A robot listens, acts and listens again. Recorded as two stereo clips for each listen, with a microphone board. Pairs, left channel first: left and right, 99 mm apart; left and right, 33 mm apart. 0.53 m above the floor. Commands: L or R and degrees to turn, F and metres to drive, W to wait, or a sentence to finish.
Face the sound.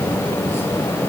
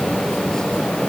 W
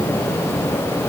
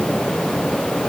W
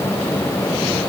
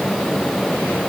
I can't make out anything to turn to.